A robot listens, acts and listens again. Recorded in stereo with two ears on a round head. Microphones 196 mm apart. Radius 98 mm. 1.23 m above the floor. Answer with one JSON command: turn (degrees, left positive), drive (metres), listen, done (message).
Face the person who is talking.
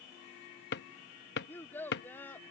{"turn": 30}
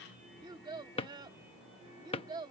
{"turn": -20}
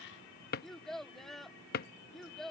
{"done": "Facing the child speaking."}